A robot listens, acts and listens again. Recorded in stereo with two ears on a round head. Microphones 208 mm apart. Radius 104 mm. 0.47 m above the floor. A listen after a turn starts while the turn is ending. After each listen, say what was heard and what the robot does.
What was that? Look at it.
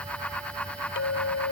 The clink: about 60° left or 120° left. Turn 60° left.
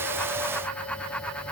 Keep listening.
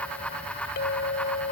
So it is at 50° left. Turn 50° left.
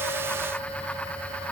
Keep listening.
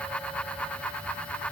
Keep listening.
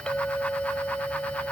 Found it: a clink, straight ahead.